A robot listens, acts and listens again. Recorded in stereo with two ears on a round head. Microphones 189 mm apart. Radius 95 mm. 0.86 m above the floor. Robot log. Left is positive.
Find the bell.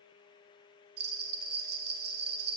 note: The bell: about 50° right or 130° right.
cmd yaw -50
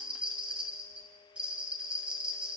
end: Found it: a bell, straight ahead.